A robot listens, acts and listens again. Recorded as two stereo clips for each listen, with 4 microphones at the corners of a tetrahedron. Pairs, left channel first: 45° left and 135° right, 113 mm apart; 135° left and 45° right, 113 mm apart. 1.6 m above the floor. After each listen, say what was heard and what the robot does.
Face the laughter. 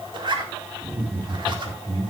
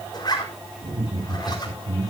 The laughter: 80° right. Turn 80° right.
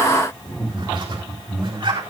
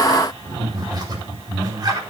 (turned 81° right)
Facing the laughter.